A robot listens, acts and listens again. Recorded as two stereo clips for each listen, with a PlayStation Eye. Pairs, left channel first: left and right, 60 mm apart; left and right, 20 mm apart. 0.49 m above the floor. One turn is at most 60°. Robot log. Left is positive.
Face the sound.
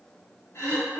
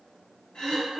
note: The throat clearing: about 55° left or 125° left.
cmd yaw +55
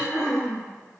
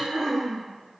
end: Facing the throat clearing, 1 to 2 m away.